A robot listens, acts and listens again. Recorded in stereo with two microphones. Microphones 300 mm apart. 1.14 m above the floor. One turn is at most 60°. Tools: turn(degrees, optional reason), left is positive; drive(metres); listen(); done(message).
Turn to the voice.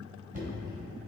listen()
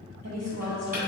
turn(degrees=-60, reason="The woman speaking: about 60° right or 120° right.")
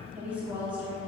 done("Facing the woman speaking.")